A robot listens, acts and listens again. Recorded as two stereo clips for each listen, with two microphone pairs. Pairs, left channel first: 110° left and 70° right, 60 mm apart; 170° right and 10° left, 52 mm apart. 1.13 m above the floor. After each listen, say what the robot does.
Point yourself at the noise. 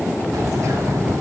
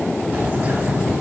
Turn 45° right.
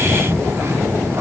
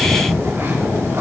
Turn 20° right.
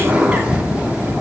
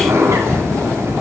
Found it: a bird, straight ahead.